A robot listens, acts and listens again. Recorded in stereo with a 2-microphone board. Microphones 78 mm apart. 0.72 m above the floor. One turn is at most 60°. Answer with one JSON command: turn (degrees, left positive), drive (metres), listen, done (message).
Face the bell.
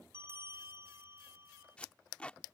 {"turn": -35}
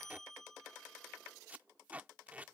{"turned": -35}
{"done": "Facing the bell."}